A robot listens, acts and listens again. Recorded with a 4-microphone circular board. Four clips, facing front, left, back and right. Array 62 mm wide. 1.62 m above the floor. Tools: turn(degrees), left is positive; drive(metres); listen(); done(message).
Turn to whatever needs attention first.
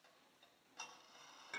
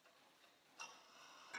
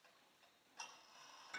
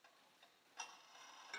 listen()
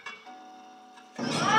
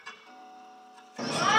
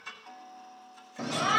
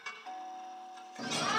turn(degrees=30)
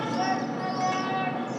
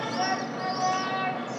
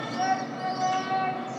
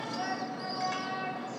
turn(degrees=20)
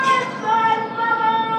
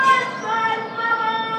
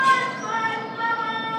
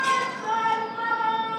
done("Found it: a shout, straight ahead, 2 to 4 m away.")